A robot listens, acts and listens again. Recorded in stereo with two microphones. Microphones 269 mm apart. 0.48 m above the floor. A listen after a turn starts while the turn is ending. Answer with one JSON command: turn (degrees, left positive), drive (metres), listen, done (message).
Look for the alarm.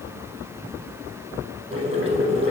{"listen": true}
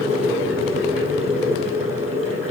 {"listen": true}
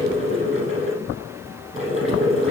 {"done": "I can't make out an alarm, only boiling."}